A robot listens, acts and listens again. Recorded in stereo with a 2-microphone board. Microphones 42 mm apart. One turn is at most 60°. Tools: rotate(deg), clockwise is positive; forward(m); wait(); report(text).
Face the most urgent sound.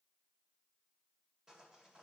wait()
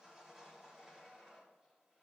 wait()
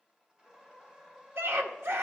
rotate(60)
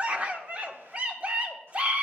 rotate(35)
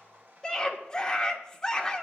rotate(-15)
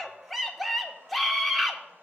report("Facing the scream.")